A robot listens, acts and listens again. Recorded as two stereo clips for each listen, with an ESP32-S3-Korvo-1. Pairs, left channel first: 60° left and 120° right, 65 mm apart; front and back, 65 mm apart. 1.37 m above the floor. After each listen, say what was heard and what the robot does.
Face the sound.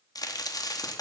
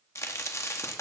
The crack: 45° left. Turn 45° left.
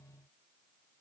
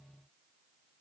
Facing where the crack came from. I can't hear it now.